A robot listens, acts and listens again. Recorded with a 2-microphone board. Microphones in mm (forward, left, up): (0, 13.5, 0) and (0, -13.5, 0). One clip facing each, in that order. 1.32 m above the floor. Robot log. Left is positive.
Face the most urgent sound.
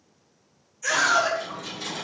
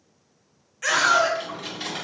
cmd yaw -90
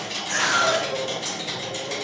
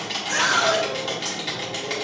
note: So it is at 10° right.
cmd yaw -10
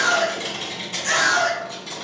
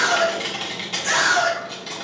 end: Facing the scream, 1 to 2 m away.